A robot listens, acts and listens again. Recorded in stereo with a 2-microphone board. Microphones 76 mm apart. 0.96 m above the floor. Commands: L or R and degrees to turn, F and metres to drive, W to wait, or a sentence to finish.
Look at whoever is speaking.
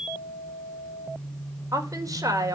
R45
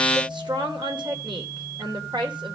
R90
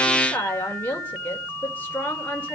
L25
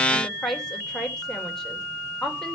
Found it: a woman speaking, straight ahead, 2 to 4 m away.